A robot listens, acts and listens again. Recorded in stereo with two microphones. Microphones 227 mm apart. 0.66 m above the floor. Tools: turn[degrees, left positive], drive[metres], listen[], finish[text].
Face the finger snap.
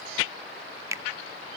Action: turn[-30]
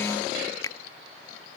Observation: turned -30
Thought: So it is at 15° left.
Action: turn[15]
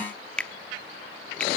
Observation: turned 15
Action: finish[Found it: a finger snap, straight ahead, under 1 m away.]